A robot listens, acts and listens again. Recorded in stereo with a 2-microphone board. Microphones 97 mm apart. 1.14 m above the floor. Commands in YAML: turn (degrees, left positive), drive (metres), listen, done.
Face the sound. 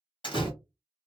turn: 55
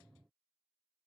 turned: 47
listen: true
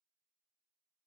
done: "I heard a door slam, but can't make it out now. It was about 10° left or 75° left."